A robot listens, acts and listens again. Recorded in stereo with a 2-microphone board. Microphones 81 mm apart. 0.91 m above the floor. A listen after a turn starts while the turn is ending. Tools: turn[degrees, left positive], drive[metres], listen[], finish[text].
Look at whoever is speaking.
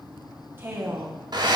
Thought: The woman speaking: about 25° right or 155° right.
Action: turn[-25]
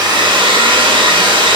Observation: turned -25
Action: listen[]
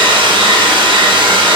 Action: listen[]
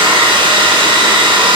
Action: finish[I heard a woman speaking, but can't make it out now. It was about straight ahead or 130° right.]